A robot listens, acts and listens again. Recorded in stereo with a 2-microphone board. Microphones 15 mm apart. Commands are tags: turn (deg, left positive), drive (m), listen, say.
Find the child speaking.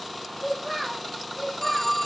<turn deg="-30"/>
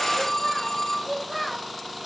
<turn deg="10"/>
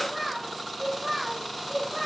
<say>Facing the child speaking, over 4 m away.</say>